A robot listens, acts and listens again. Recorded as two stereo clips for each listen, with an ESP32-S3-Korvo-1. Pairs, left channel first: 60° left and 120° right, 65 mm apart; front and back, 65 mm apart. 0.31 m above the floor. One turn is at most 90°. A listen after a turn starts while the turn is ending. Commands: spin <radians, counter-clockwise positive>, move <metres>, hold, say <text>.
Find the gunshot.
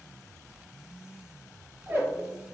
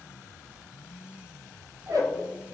hold
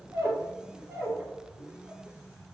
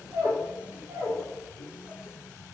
hold
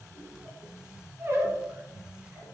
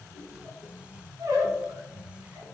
say I can't make out a gunshot, only a squeak.